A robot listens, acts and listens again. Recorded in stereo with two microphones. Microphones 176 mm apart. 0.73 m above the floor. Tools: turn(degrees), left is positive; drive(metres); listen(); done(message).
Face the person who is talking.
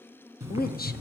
turn(degrees=55)
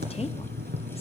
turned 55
listen()
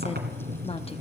turn(degrees=40)
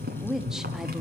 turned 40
done("Facing the woman speaking, under 1 m away.")